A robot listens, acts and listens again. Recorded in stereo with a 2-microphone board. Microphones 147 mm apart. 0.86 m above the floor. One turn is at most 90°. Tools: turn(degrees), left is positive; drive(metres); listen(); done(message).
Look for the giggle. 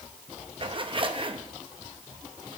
listen()
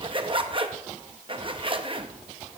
listen()
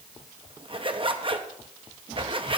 done("I can't make out a giggle to turn to.")